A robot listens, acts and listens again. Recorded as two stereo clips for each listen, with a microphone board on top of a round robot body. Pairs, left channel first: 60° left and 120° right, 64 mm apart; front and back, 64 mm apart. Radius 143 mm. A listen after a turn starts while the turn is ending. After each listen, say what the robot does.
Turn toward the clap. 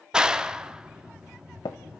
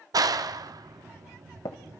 Turn 160° left.
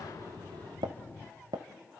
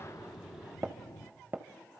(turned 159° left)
Keep listening.
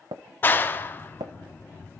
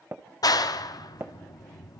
Found it: a clap, straight ahead, 1 to 2 m away.